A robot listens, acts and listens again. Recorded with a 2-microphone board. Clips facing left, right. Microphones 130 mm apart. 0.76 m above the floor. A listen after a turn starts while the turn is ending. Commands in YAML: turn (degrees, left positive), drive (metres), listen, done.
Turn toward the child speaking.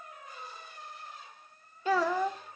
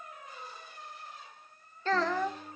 turn: 30
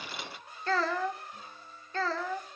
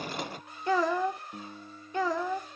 turn: -15
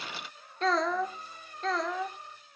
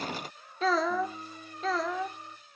done: "Found it: a child speaking, straight ahead."